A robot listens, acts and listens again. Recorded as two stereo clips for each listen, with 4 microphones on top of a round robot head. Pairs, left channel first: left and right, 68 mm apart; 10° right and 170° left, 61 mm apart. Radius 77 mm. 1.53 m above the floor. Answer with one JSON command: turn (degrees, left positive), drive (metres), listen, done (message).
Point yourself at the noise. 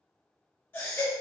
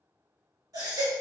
{"turn": 150}
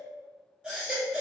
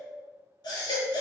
{"done": "Facing the baby crying."}